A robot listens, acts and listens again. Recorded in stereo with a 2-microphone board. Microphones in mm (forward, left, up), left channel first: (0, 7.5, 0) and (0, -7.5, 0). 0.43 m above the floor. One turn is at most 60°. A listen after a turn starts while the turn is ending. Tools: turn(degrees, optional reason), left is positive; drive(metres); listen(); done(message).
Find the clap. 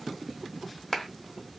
turn(degrees=25, reason="The clap: about 25° left or 155° left.")
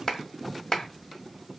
turn(degrees=60, reason="So it is at 125° left.")
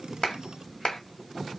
turn(degrees=60, reason="The clap is now 65° left.")
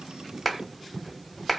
done("Facing the clap.")